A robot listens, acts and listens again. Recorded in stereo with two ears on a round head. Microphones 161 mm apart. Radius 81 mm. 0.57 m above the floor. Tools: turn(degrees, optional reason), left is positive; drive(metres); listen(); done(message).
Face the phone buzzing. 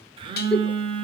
turn(degrees=-30, reason="The phone buzzing: about 30° right or 150° right.")
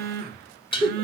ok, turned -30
turn(degrees=-115, reason="So it is at 115° right.")
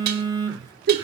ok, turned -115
turn(degrees=-25, reason="The phone buzzing is now 25° right.")
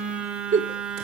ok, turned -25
done("Found it: a phone buzzing, straight ahead, 1 to 2 m away.")